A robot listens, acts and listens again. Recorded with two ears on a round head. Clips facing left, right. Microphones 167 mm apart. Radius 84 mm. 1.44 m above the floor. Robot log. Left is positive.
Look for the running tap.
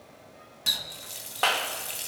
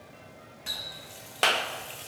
note: The running tap: about 55° left or 125° left.
cmd yaw +55
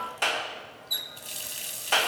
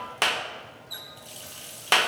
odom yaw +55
note: So it is at 30° left.
cmd yaw +30
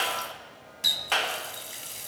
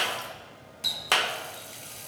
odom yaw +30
note: The running tap is now 10° left.
cmd yaw +10
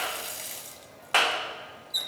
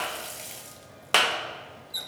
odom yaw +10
end: Facing the running tap.